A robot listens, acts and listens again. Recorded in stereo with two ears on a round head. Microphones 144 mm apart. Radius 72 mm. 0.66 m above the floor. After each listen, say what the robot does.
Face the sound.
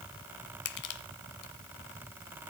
Turn 65° left.
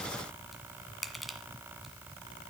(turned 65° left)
Facing the crushing, 1 to 2 m away.